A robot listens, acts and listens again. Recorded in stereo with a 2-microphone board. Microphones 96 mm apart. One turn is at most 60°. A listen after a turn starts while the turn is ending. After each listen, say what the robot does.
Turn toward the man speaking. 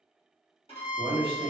Turn 60° right.
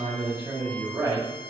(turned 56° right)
Turn 35° right.
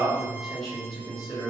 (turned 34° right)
Facing the man speaking.